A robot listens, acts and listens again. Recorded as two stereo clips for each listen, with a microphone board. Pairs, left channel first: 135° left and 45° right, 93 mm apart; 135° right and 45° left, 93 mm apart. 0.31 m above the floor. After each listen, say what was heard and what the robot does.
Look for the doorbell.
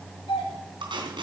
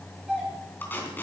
The doorbell: 125° left. Turn 125° left.
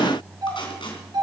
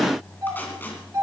The doorbell is now 10° right. Turn 10° right.
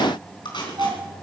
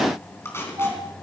Found it: a doorbell, straight ahead, over 4 m away.